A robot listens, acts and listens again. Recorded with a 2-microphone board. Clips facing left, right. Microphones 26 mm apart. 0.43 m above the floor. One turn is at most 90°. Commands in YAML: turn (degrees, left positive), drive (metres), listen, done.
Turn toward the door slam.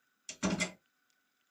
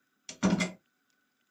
turn: -30
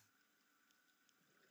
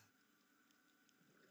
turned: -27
listen: true
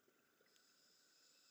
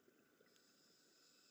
done: "I heard a door slam, but can't make it out now. It was about straight ahead or 125° right."